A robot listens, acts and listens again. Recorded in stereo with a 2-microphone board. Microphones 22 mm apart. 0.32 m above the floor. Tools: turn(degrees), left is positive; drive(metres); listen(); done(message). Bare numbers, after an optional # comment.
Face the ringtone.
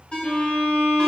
# The ringtone: about 45° left or 135° left.
turn(45)
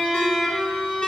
listen()
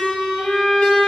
listen()
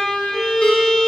done("I heard a ringtone, but can't make it out now. It was about straight ahead or 90° left.")